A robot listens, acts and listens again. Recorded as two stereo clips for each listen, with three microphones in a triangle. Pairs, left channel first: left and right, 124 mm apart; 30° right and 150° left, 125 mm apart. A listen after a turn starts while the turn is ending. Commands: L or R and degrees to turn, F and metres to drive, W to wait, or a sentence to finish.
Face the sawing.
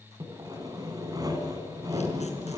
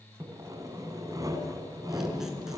R150
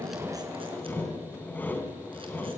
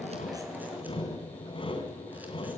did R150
L15
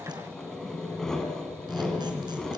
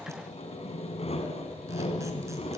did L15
Facing the sawing.